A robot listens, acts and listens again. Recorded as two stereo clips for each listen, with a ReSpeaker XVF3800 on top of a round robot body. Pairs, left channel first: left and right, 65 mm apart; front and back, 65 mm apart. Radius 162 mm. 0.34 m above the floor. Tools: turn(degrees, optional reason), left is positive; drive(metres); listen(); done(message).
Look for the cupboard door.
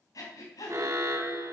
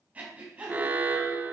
listen()
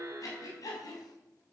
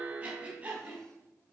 listen()
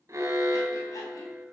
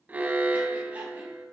done("I can't make out a cupboard door, only breathing and an alarm.")